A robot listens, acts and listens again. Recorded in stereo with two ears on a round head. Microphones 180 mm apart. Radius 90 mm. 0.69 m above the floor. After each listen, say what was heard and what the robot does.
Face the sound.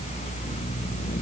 Keep listening.
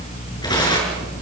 The tearing paper: about 25° left or 155° left. Turn 25° left.
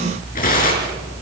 So it is at 135° left. Turn 135° left.
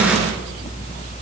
Keep listening.
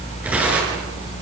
Facing the tearing paper, over 4 m away.